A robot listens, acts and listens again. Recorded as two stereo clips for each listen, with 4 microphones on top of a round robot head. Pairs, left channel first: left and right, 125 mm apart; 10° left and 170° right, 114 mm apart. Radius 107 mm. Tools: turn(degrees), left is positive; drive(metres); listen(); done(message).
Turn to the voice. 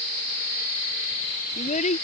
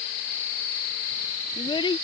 turn(degrees=60)
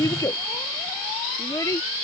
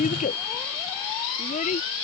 turn(degrees=25)
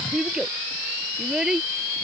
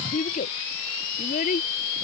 done("Facing the child speaking.")